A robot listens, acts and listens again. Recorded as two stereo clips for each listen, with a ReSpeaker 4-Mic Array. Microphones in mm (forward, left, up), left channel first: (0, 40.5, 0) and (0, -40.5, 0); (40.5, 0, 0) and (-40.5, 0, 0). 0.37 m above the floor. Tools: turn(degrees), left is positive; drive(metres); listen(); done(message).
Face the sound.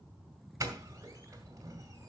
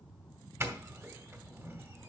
turn(degrees=-130)
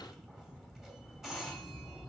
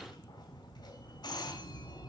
done("Found it: a doorbell, straight ahead, 2 to 4 m away.")